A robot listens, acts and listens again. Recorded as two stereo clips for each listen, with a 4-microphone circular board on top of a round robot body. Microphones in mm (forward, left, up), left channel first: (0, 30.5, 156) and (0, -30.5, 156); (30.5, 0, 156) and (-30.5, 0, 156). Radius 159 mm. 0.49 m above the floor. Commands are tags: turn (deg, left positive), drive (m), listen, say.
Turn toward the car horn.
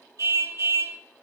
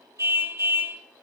<turn deg="-130"/>
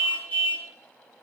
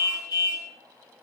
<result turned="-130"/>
<turn deg="25"/>
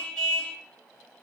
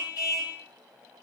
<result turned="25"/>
<turn deg="15"/>
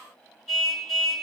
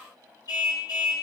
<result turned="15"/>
<say>Found it: a car horn, straight ahead, over 4 m away.</say>